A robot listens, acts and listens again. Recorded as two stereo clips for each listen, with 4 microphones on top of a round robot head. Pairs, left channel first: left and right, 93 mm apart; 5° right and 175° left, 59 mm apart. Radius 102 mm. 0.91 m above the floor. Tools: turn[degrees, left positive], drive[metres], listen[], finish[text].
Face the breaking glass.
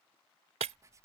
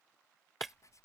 Thought: The breaking glass: 95° right.
Action: turn[-95]
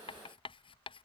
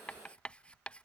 Action: finish[Facing where the breaking glass came from. I can't hear it now.]